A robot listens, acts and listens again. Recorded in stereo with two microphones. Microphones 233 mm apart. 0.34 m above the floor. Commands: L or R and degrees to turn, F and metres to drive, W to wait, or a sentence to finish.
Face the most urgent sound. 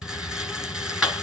W
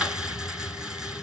W
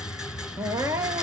R30
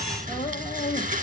L20
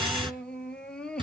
Facing the crying.